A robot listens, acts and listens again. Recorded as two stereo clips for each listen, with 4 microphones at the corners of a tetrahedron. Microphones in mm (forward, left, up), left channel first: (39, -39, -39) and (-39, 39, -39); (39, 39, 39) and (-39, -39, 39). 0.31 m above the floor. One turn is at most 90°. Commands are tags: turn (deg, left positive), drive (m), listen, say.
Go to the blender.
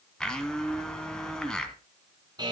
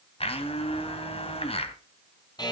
<turn deg="40"/>
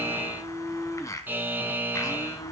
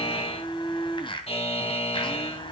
<turn deg="10"/>
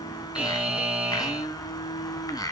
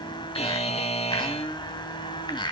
<drive m="1.0"/>
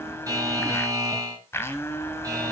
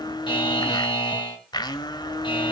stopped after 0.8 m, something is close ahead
<turn deg="15"/>
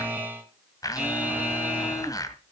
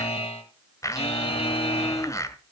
<say>Arrived at the blender, straight ahead.</say>